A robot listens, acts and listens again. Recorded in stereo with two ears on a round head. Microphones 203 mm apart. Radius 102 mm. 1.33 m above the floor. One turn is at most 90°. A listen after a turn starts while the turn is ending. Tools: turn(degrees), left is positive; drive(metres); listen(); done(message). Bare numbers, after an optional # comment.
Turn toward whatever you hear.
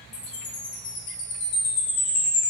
turn(90)
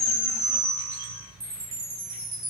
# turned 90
# So it is at 10° right.
turn(-10)
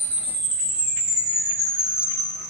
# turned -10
done("Found it: a chime, straight ahead, 1 to 2 m away.")